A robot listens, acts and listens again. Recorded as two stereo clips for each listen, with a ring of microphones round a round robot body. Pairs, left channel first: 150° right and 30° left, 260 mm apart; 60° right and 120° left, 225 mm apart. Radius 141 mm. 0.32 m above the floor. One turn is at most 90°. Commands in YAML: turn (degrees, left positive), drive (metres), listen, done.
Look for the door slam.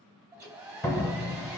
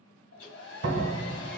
turn: 90
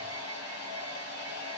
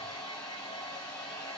turn: 40
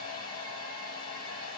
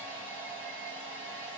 done: "I heard a door slam from this way, but can't make it out now."